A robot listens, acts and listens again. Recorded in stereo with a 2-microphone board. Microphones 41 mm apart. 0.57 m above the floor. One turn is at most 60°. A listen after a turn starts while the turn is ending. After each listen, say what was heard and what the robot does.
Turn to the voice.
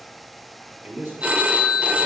The man speaking: about 55° right or 125° right. Turn 55° right.
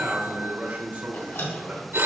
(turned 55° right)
So it is at 55° right. Turn 55° right.
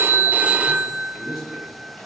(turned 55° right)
Found it: a man speaking, straight ahead, 2 to 4 m away.